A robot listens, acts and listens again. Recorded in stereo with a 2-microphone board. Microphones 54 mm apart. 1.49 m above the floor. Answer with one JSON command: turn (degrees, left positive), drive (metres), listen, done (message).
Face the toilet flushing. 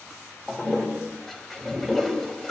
{"turn": 30}
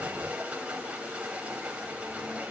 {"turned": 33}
{"turn": -25}
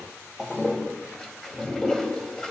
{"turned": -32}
{"done": "Found it: a toilet flushing, straight ahead, 2 to 4 m away."}